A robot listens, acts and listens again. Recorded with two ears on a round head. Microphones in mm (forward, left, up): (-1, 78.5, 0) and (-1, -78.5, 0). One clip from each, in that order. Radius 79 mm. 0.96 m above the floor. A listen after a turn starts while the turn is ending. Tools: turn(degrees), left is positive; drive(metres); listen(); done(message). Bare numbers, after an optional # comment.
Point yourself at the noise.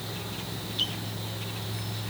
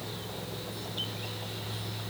listen()
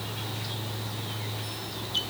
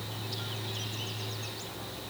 listen()
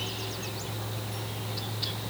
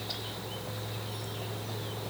done("I can't make out anything to turn to.")